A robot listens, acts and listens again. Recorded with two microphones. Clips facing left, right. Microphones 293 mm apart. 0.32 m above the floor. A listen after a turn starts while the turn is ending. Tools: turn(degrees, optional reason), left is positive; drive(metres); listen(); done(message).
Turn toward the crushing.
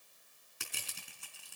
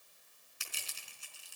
turn(degrees=65, reason="The crushing: about 65° left or 115° left.")
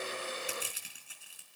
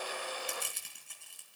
done("Found it: crushing, straight ahead, over 4 m away.")